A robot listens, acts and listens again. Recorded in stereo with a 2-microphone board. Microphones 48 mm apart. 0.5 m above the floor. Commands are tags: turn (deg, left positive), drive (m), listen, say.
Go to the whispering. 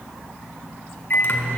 <listen/>
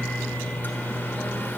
<listen/>
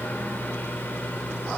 <say>I can't make out whispering to turn to.</say>